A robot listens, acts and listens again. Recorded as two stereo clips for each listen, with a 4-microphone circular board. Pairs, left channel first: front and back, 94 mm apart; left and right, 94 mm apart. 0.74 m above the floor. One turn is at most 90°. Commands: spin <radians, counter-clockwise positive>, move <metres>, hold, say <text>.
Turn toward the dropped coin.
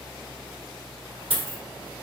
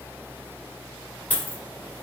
spin 1.57
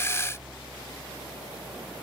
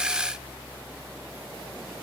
spin 1.31
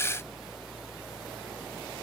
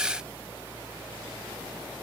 say Facing where the dropped coin came from. I can't hear it now.